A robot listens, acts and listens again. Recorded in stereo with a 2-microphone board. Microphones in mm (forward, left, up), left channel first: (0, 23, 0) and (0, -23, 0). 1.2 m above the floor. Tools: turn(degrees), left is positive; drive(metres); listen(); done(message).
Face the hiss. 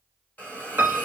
turn(degrees=30)
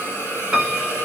turn(degrees=120)
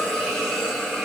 turn(degrees=10)
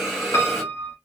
done("Facing the hiss, 1 to 2 m away.")